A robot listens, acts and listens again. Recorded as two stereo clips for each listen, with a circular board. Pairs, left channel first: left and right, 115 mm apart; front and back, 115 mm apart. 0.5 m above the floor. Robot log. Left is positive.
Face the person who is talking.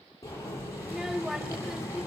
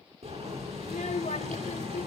end: Facing the child speaking, 1 to 2 m away.